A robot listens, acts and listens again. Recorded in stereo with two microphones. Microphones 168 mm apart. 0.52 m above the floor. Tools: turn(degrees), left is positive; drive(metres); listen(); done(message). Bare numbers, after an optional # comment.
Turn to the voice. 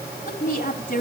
# The woman speaking: about 50° left or 130° left.
turn(50)
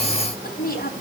# So it is at 75° left.
turn(75)
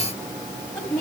# The woman speaking is now 20° left.
turn(20)
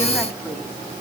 listen()
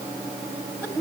done("Facing the woman speaking, 2 to 4 m away.")